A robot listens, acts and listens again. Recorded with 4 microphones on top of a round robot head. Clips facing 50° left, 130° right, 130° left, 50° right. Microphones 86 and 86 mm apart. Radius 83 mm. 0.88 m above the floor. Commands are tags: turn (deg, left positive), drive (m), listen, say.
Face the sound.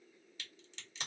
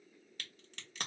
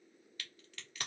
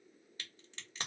<turn deg="-105"/>
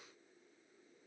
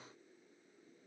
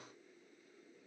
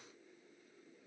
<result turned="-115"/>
<turn deg="10"/>
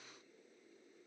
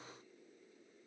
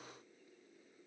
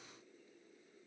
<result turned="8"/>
<say>Facing where the crack came from. I can't hear it now.</say>